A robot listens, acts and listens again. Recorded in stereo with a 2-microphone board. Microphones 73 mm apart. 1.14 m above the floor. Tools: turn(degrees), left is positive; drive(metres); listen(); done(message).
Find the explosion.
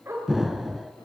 turn(degrees=-30)
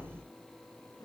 listen()
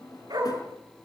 done("I heard an explosion, but can't make it out now. It was about 25° left or 145° right.")